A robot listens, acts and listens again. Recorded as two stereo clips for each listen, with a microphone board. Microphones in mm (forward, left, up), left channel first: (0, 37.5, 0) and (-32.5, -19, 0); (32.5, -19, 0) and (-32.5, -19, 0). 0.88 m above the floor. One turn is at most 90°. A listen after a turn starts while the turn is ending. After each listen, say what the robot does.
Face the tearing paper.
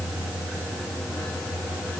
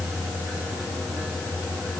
Keep listening.
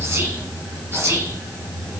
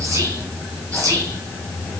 Keep listening.
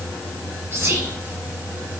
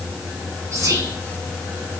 I can't make out tearing paper, only whispering.